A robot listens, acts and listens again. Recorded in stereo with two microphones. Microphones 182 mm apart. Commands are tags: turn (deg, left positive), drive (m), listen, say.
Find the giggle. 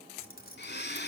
<listen/>
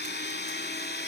<listen/>
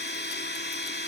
<say>I can't make out a giggle, only keys jangling and a blender.</say>